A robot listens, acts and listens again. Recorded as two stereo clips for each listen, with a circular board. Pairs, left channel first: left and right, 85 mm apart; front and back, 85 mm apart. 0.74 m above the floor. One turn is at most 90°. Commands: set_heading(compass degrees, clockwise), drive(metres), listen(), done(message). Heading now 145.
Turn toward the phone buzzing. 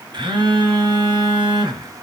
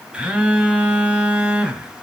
set_heading(235)
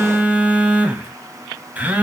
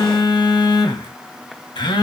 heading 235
set_heading(250)
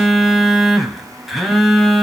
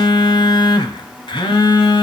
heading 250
done("Found it: a phone buzzing, straight ahead, 1 to 2 m away.")